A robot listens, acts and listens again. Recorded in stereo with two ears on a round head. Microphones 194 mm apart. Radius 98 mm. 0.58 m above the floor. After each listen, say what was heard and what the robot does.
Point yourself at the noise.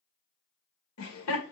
The laughter: about 70° left or 110° left. Turn 70° left.
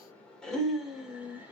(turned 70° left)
So it is at 10° right. Turn 10° right.
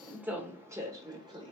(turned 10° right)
The laughter is now 25° right. Turn 25° right.
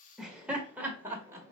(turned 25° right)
The laughter is now 15° right. Turn 15° right.
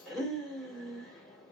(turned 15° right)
Facing the laughter.